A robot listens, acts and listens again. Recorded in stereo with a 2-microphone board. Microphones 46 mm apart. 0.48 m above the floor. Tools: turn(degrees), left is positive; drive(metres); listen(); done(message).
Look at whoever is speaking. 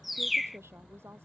turn(degrees=-90)
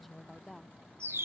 done("Facing the woman speaking.")